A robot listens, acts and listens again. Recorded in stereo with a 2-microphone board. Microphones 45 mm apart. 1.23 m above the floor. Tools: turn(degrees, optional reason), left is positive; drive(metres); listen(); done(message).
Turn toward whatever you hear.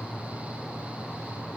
listen()
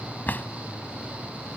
turn(degrees=45, reason="The drawer: about 45° left or 135° left.")
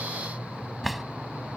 done("Found it: a drawer, straight ahead.")